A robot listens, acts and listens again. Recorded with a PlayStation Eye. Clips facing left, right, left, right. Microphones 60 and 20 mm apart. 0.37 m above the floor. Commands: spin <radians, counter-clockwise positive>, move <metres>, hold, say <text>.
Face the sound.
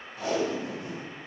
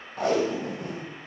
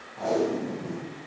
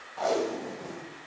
spin -0.96
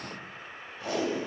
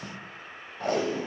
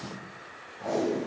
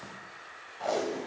spin -1.05
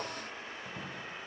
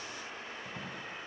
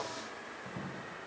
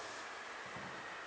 hold
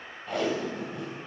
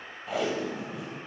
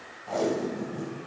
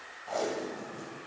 say Facing the tape being pulled, 1 to 2 m away.